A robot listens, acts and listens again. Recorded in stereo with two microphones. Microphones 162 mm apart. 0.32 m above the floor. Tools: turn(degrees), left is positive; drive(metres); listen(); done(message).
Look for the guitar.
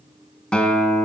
turn(degrees=30)
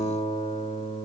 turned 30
turn(degrees=145)
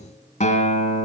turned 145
turn(degrees=50)
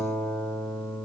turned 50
turn(degrees=10)
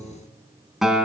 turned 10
done("Found it: a guitar, straight ahead.")